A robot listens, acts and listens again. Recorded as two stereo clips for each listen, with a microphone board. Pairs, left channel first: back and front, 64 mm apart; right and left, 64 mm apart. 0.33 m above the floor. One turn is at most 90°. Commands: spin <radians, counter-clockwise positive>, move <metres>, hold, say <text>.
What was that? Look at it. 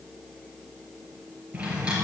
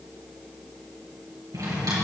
spin 1.31
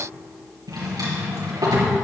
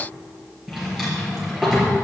say Facing the drawer.